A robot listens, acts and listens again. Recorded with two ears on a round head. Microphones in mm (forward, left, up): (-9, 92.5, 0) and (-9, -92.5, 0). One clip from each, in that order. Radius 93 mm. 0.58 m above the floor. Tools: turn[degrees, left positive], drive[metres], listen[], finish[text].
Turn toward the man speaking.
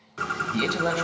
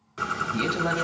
Thought: The man speaking: about 30° left or 150° left.
Action: turn[30]
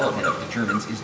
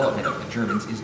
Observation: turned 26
Action: turn[30]
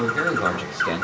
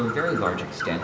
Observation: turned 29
Action: finish[Facing the man speaking, 2 to 4 m away.]